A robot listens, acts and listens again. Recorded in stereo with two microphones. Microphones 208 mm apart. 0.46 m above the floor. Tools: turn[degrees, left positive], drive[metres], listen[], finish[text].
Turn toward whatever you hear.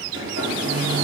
Action: turn[-90]
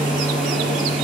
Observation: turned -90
Action: finish[Found it: a hair dryer, straight ahead, over 4 m away.]